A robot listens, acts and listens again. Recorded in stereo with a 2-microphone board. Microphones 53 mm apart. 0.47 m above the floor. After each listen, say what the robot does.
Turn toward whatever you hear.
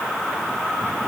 Keep listening.
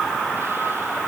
Keep listening.
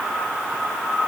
I can't make out anything.